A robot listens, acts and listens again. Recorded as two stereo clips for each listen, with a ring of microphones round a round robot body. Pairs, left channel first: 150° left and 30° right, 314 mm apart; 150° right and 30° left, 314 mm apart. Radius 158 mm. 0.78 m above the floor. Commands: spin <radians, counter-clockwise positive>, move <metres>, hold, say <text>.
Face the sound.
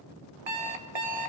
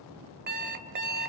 spin -0.52
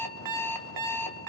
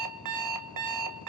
say Found it: an alarm clock, straight ahead, 2 to 4 m away.